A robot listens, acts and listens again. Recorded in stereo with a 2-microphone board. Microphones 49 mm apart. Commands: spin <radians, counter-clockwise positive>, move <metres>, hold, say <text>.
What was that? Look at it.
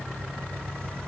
hold
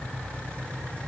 hold
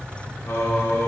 spin 1.57
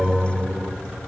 say Found it: singing, straight ahead, 1 to 2 m away.